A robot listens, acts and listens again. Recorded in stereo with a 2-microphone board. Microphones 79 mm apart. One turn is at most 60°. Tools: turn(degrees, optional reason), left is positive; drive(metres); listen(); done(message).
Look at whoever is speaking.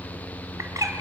listen()
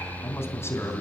turn(degrees=35, reason="The man speaking: about 35° left or 145° left.")
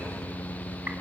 listen()
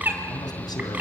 listen()
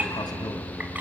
turn(degrees=60, reason="So it is at 110° left.")
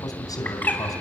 turn(degrees=60, reason="The man speaking is now 60° left.")
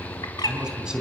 turn(degrees=-10, reason="The man speaking is now 10° right.")
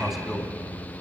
done("Found it: a man speaking, straight ahead.")